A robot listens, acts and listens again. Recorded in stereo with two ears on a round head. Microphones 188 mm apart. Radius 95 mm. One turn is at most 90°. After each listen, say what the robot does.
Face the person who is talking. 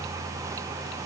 Keep listening.
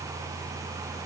Keep listening.
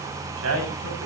Turn 90° right.
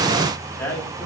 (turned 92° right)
Turn 10° left.
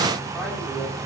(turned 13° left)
Keep listening.
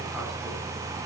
Keep listening.
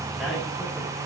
Facing where the man speaking came from. I can't hear it now.